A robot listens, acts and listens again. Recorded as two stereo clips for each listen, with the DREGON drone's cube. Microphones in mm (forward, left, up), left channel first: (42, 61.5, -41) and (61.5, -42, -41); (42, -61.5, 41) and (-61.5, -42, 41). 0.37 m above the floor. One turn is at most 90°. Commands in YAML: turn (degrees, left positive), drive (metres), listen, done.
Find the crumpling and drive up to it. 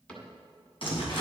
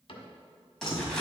turn: 75
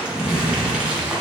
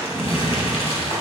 drive: 1.0
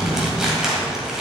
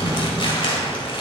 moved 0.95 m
drive: 1.0
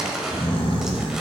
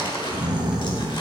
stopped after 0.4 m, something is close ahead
done: "Arrived at the crumpling, straight ahead."